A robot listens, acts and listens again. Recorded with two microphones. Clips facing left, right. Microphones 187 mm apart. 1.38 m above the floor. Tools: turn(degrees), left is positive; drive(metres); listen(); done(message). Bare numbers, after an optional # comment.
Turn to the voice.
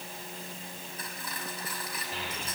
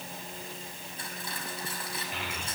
# The child speaking: about 35° left or 145° left.
turn(35)
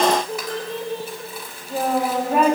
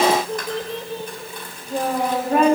done("Facing the child speaking, over 4 m away.")